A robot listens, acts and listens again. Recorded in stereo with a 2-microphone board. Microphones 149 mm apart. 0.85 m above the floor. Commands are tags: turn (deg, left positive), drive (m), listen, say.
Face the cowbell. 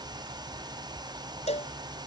<turn deg="45"/>
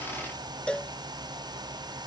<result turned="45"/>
<say>Facing the cowbell.</say>